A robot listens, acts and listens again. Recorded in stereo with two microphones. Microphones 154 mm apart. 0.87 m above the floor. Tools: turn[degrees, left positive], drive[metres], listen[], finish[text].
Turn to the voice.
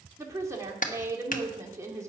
Thought: The woman speaking: about 20° right or 160° right.
Action: turn[-20]
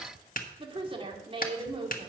Thought: So it is at 145° right.
Action: turn[-145]
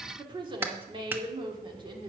Thought: The woman speaking is now 35° right.
Action: turn[-35]
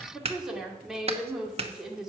Action: finish[Found it: a woman speaking, straight ahead.]